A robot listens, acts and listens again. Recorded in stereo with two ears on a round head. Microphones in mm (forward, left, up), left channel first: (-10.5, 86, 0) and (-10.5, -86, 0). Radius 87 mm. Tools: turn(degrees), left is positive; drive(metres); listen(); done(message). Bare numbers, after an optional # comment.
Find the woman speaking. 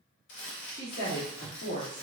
# The woman speaking: about 60° left or 120° left.
turn(60)
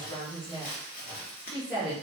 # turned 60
done("Facing the woman speaking.")